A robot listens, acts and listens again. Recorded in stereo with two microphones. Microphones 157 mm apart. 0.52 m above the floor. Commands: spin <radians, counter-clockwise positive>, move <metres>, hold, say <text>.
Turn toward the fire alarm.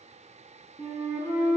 hold
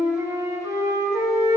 hold
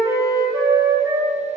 say I can't make out a fire alarm, only a flute.